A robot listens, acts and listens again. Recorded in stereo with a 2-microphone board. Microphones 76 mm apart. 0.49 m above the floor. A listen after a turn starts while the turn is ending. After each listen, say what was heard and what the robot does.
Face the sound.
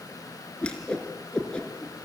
The whoosh: about 15° left or 165° left. Turn 15° left.
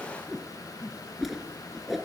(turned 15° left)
Facing the whoosh.